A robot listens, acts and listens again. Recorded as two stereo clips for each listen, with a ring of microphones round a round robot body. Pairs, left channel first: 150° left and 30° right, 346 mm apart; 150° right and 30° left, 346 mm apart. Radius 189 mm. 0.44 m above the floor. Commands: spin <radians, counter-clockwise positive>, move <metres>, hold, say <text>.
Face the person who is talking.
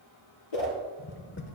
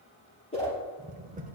hold
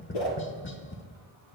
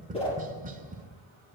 hold
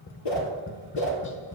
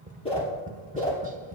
say I can't make out anyone speaking, only a whoosh and tapping.